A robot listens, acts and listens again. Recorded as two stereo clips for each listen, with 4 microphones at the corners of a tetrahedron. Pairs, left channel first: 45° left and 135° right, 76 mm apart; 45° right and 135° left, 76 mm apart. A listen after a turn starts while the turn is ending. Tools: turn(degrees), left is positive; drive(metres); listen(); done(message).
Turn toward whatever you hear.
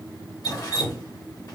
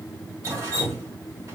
turn(degrees=85)
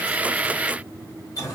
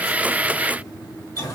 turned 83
done("Facing the dripping, 1 to 2 m away.")